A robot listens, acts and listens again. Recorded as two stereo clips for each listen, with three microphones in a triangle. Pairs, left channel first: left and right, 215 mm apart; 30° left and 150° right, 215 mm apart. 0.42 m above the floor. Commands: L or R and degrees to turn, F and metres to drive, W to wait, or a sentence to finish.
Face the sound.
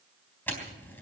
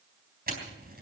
L170
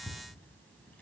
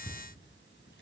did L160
L10
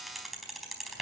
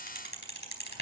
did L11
Found it: a camera shutter, straight ahead.